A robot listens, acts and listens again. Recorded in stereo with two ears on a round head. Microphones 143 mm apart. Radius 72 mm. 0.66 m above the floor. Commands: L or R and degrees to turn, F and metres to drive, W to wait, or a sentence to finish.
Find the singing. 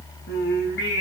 L75
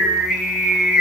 Found it: singing, straight ahead, over 4 m away.